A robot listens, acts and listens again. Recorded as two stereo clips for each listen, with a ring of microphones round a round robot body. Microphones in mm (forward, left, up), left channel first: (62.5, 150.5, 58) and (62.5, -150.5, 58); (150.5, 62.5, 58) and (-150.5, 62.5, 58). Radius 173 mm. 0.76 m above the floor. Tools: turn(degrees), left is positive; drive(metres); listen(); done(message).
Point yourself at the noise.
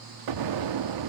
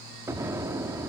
turn(degrees=-100)
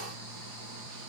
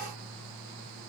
done("Facing where the explosion came from. I can't hear it now.")